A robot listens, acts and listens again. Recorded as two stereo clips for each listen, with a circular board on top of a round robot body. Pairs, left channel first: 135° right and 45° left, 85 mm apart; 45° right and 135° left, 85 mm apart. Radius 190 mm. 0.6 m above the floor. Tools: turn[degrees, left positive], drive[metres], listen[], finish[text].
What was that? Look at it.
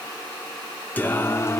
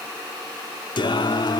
Thought: The singing: 80° right.
Action: turn[-80]
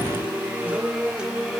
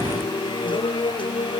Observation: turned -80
Thought: The singing is now 40° right.
Action: turn[-40]
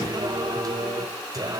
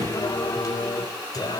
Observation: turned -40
Action: finish[Found it: singing, straight ahead.]